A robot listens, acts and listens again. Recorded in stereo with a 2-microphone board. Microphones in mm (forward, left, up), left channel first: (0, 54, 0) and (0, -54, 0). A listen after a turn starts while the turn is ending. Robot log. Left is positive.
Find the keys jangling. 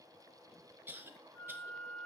cmd idle
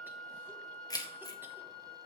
note: The keys jangling: about 35° left or 145° left.
cmd yaw +35
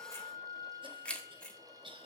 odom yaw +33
note: So it is at 10° left.
cmd yaw +10
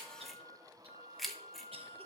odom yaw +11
end: Found it: keys jangling, straight ahead.